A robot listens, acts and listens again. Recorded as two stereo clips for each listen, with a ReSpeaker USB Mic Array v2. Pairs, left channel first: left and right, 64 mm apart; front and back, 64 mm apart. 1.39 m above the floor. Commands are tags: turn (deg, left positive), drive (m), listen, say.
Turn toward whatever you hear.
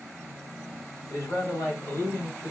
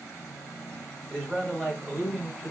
<turn deg="110"/>
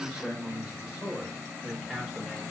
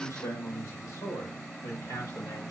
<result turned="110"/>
<say>Found it: a man speaking, straight ahead.</say>